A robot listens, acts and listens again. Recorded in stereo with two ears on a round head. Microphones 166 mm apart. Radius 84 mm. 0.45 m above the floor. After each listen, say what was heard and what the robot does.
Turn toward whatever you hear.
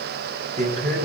The man speaking: about 40° right or 140° right. Turn 40° right.
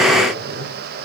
Keep listening.
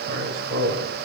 So it is at 105° right. Turn 105° right.
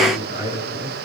The man speaking is now 40° left. Turn 40° left.
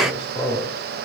The man speaking is now 25° left. Turn 25° left.
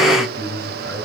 The man speaking is now 15° left. Turn 15° left.
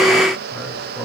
Facing the man speaking.